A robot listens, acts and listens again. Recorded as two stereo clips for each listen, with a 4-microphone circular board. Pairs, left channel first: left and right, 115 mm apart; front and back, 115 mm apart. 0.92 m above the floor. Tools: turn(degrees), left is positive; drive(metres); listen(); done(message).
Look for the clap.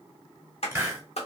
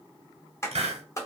turn(degrees=65)
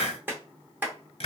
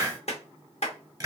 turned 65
turn(degrees=-20)
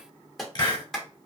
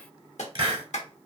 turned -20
done("Found it: a clap, straight ahead, 1 to 2 m away.")